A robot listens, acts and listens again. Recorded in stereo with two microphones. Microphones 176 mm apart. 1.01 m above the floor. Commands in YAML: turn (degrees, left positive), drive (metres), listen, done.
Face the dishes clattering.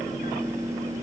listen: true
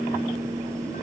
listen: true
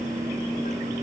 done: "I can't make out dishes clattering to turn to."